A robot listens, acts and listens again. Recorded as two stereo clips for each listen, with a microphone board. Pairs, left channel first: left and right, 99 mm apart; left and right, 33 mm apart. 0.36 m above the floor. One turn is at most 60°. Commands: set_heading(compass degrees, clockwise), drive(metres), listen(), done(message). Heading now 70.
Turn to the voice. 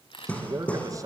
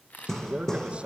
set_heading(105)
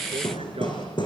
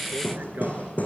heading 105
listen()
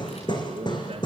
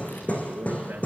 set_heading(165)
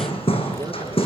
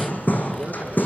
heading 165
set_heading(215)
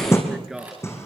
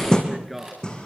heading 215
done("Facing the man speaking, over 4 m away.")